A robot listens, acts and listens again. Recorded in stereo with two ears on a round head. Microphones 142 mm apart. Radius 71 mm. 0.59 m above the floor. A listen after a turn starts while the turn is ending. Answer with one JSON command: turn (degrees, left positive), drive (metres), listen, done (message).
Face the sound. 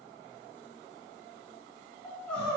{"turn": 30}
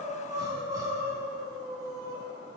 {"turn": -25}
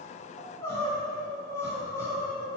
{"turn": 15}
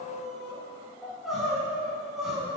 {"done": "Facing the crying."}